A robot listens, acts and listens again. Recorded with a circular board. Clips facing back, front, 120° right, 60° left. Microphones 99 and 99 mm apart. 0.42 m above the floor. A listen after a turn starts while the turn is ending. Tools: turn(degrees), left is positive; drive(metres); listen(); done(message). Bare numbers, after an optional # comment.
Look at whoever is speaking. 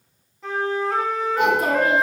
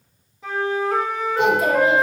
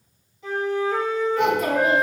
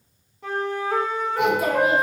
# The child speaking: 140° left.
turn(140)
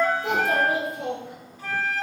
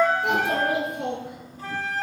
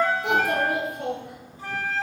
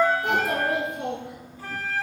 # The child speaking is now 10° right.
turn(-10)
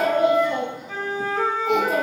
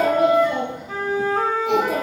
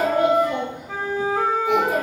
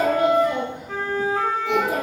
# The child speaking is now 10° right.
turn(-10)
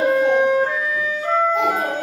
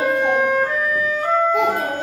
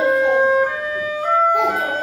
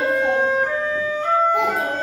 done("Found it: a child speaking, straight ahead, over 4 m away.")